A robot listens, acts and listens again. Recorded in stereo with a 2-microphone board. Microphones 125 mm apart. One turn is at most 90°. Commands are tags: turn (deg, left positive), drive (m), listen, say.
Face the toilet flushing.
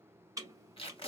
<turn deg="-30"/>
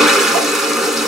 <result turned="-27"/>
<say>Facing the toilet flushing, under 1 m away.</say>